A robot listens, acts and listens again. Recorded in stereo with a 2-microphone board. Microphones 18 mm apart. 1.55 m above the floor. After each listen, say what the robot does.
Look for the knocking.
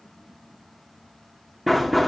Turn 30° left.
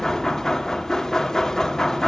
Turn 155° left.
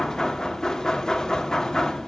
Turn 35° left.
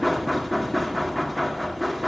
Facing the knocking.